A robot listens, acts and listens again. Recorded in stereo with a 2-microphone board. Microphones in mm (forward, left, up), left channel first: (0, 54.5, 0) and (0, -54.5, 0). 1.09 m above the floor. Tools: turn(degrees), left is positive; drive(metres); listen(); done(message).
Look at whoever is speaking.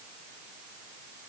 listen()
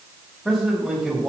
turn(degrees=30)
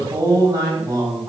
turn(degrees=-30)
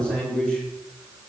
turn(degrees=10)
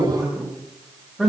done("Found it: a man speaking, straight ahead.")